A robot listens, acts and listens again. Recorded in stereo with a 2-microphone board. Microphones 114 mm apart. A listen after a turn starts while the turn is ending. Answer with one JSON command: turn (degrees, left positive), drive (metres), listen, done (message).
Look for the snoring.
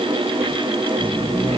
{"turn": 30}
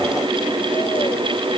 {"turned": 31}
{"listen": true}
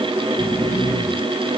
{"turn": 135}
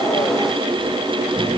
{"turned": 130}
{"done": "Found it: snoring, straight ahead."}